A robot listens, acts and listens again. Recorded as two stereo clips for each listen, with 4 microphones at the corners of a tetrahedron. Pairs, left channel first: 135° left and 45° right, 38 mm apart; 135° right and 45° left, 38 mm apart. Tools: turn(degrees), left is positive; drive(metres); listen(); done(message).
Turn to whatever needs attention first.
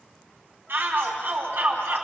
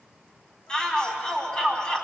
turn(degrees=-65)
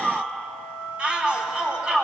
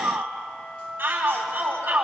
turn(degrees=15)
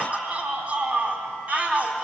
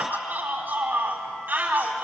done("Found it: a shout, straight ahead, over 4 m away.")